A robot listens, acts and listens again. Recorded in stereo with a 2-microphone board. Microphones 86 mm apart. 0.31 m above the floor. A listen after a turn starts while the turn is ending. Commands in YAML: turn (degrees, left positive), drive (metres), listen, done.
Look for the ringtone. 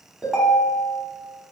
turn: -30
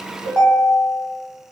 turn: 15
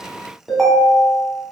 done: "Found it: a ringtone, straight ahead, under 1 m away."